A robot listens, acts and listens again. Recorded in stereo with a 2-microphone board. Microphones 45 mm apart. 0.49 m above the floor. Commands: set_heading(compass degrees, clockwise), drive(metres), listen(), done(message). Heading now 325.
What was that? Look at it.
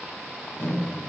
set_heading(270)
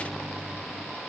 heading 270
set_heading(255)
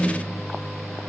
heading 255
done("Found it: a microwave, straight ahead.")